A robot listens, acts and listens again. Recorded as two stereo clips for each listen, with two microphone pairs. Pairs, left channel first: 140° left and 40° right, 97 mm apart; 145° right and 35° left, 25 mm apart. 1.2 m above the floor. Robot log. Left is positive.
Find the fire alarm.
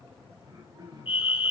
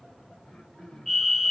note: The fire alarm: 135° left.
cmd yaw +135
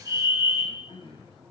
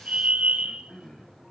note: The fire alarm is now 15° left.
cmd yaw +15
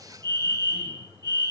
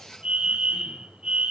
end: Facing the fire alarm.